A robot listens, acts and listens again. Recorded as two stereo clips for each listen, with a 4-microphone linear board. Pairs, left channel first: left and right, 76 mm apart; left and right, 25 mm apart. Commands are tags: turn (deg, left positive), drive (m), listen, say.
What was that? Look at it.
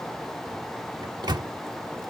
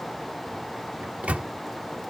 <turn deg="-70"/>
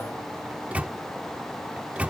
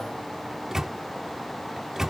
<turn deg="-20"/>
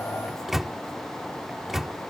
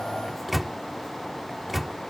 <say>Found it: a microwave, straight ahead.</say>